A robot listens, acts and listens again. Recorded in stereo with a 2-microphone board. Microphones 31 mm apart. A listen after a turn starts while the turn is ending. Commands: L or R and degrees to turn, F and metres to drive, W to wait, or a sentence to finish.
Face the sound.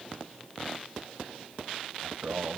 R55
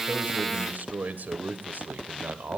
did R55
R70
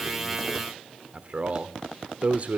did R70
R45
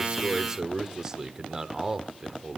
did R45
R20
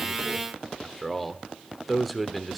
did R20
Facing the man speaking, 1 to 2 m away.